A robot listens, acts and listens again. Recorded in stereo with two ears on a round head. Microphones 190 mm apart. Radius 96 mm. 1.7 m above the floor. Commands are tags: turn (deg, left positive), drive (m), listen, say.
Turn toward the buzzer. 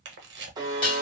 <turn deg="-20"/>
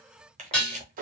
<turn deg="-140"/>
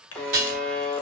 <say>Facing the buzzer.</say>